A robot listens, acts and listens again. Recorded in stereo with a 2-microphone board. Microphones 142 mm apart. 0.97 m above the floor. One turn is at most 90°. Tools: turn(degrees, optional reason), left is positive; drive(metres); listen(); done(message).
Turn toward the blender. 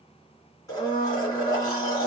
turn(degrees=25, reason="The blender: about 25° left or 155° left.")
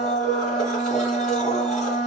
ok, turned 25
done("Facing the blender, 2 to 4 m away.")